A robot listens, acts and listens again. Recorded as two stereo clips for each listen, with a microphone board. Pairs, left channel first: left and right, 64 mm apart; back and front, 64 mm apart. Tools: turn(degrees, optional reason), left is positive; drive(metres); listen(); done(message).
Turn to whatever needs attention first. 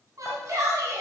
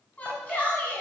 turn(degrees=-115, reason="The shout: 115° right.")
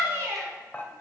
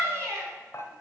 turn(degrees=-40, reason="The shout is now 40° right.")
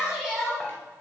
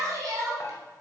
turn(degrees=-10, reason="The shout is now 10° right.")
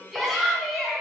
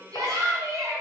done("Found it: a shout, straight ahead, 2 to 4 m away.")